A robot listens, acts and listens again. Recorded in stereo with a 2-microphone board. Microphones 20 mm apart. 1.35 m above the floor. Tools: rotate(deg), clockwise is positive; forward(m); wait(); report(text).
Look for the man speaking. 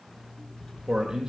rotate(35)
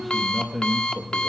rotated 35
rotate(-10)
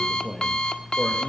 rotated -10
rotate(-15)
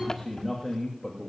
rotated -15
rotate(-15)
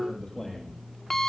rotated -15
report("Facing the man speaking, 2 to 4 m away.")